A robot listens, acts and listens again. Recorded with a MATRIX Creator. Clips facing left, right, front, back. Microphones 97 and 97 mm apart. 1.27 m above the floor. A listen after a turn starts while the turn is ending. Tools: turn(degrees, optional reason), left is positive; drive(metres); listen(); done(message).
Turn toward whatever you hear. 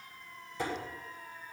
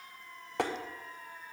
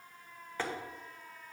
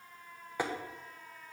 turn(degrees=-105, reason="The tapping: 105° right.")
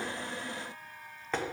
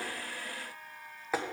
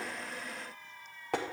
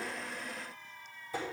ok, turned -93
turn(degrees=-10, reason="The tapping is now 10° right.")
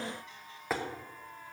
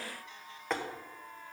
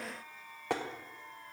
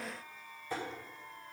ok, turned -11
done("Facing the tapping.")